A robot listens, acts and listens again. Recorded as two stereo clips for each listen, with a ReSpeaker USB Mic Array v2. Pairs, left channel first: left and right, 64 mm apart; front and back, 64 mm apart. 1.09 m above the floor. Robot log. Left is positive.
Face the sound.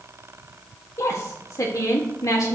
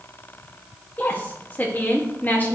note: The woman speaking: 60° left.
cmd yaw +60
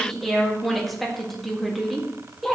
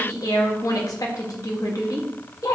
end: Facing the woman speaking, 1 to 2 m away.